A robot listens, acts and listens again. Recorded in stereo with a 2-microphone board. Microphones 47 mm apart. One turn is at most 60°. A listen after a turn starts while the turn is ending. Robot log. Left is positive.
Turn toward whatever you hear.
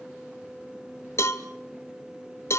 note: The cowbell: about 65° left or 115° left.
cmd yaw +60
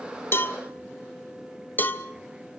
note: So it is at 45° left.
cmd yaw +45
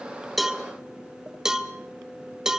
note: The cowbell is now 10° right.
cmd yaw -10
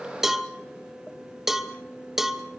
end: Facing the cowbell.